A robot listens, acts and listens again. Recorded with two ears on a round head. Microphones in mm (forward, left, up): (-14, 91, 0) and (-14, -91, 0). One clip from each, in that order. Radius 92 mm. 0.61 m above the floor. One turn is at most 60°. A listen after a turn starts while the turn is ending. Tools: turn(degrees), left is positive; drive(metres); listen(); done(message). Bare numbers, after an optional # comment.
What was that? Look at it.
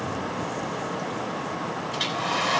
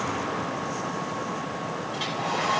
# The hair dryer: about 45° left or 135° left.
turn(45)
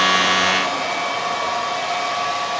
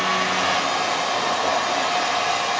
done("Facing the hair dryer, 2 to 4 m away.")